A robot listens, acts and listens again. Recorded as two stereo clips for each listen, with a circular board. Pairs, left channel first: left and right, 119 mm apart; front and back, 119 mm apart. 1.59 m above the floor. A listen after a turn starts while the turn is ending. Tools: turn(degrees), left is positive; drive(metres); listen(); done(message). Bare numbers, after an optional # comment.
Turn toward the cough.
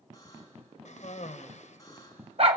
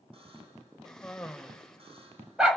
# The cough: 85° left.
turn(85)
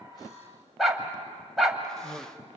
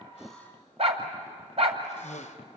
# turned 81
done("Found it: a cough, straight ahead, 1 to 2 m away.")